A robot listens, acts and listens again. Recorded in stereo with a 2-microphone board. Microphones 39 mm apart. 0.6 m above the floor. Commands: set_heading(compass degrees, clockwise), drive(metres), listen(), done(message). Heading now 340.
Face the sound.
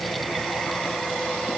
listen()
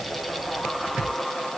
listen()
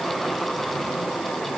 done("I can't make out anything to turn to.")